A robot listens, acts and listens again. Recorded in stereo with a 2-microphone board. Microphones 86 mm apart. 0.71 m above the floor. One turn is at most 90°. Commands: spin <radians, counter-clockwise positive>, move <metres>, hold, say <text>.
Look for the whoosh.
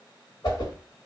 spin 1.05
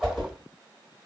say Facing the whoosh.